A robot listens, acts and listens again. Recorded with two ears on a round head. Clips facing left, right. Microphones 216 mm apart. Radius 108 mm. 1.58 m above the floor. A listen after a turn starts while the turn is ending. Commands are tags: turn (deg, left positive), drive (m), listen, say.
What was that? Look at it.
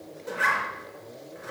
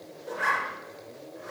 <turn deg="45"/>
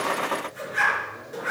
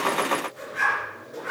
<turn deg="90"/>
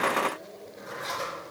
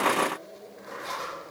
<turn deg="60"/>
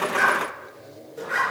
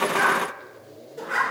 <say>Found it: a zipper, straight ahead, over 4 m away.</say>